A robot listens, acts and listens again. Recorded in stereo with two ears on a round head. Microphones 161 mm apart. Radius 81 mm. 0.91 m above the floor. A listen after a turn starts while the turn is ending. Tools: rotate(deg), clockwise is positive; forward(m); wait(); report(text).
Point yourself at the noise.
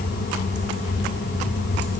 wait()
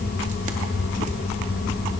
wait()
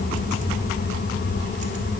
report("I can't make out anything to turn to.")